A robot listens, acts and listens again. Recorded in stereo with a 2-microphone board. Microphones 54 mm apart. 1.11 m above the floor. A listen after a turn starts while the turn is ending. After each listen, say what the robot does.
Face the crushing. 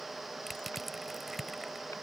Turn 30° left.
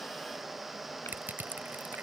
Turn 35° right.
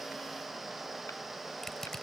Turn 10° left.
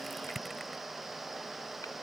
Facing the crushing.